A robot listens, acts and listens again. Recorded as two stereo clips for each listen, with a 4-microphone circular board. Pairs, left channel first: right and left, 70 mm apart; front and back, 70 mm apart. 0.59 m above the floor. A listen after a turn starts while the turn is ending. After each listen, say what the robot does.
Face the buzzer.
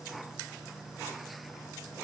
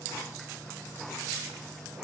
Keep listening.
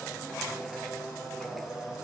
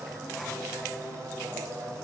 Keep listening.
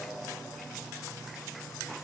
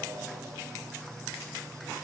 I can't make out a buzzer to turn to.